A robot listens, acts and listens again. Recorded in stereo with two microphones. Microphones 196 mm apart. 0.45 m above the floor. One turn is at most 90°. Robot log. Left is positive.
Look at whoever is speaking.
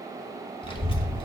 note: The child speaking: about 25° left or 155° left.
cmd yaw +25
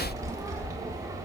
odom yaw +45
note: So it is at 15° right.
cmd yaw -15
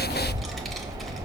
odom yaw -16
end: Facing the child speaking.